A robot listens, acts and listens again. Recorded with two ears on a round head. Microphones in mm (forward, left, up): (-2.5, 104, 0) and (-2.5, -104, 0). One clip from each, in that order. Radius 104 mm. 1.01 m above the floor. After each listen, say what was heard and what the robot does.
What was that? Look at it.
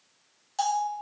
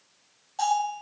The bell: about 55° left or 125° left. Turn 55° left.
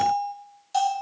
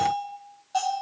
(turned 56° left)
So it is at 65° left. Turn 65° left.
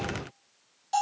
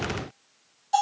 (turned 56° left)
The bell is now 10° left. Turn 10° left.
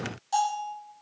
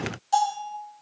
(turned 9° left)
Found it: a bell, straight ahead.